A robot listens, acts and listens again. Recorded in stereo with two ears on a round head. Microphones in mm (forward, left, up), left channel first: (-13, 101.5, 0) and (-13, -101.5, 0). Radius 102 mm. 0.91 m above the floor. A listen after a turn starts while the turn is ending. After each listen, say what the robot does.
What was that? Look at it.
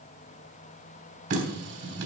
Turn 60° right.
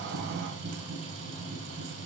Turn 65° right.
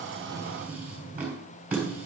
Turn 10° right.
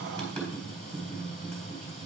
Facing the running tap, 2 to 4 m away.